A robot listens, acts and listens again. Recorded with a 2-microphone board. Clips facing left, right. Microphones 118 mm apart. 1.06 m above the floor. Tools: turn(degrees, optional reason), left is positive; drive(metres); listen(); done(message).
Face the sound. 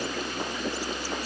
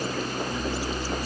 listen()
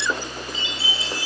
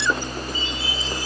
turn(degrees=90)
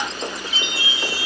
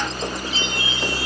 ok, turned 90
turn(degrees=10, reason="So it is at 10° left.")
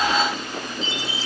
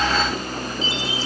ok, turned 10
done("Facing the chime, over 4 m away.")